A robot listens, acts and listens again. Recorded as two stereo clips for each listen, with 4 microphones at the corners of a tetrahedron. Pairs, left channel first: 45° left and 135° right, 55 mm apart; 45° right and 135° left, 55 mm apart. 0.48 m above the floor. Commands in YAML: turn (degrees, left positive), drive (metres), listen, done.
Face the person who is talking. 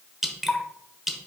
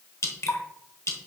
listen: true
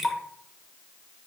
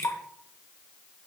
listen: true
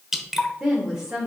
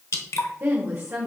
turn: 160
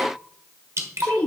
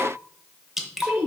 turn: 100
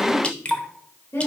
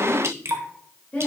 turn: 15
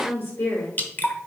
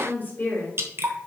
done: "Facing the woman speaking, 2 to 4 m away."